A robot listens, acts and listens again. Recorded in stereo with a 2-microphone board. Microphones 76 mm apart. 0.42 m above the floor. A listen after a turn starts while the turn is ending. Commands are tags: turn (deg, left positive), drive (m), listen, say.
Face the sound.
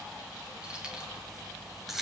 <turn deg="30"/>
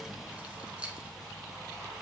<turn deg="-15"/>
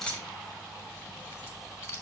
<turn deg="35"/>
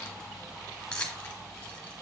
<turn deg="15"/>
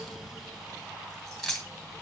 <say>Found it: keys jangling, straight ahead.</say>